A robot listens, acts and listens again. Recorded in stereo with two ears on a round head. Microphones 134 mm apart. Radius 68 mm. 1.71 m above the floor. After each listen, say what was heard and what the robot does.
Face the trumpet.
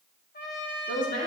The trumpet: about 65° left or 115° left. Turn 65° left.
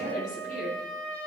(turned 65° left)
So it is at 10° left. Turn 10° left.
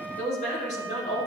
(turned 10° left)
Keep listening.
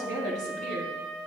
Found it: a trumpet, straight ahead.